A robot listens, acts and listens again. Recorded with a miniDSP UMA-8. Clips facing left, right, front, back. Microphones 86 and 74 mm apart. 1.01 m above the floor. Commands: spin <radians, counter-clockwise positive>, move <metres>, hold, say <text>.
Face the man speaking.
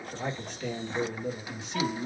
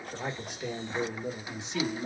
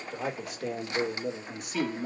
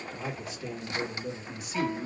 spin -0.52
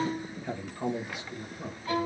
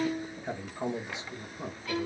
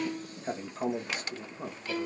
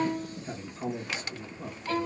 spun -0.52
spin -0.61
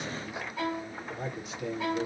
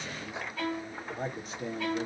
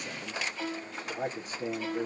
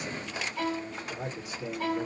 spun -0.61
spin -0.79
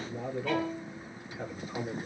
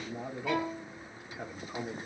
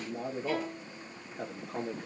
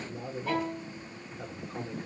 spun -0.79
spin -0.26
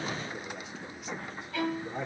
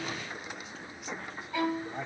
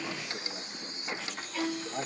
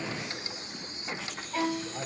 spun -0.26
say Facing the man speaking, 1 to 2 m away.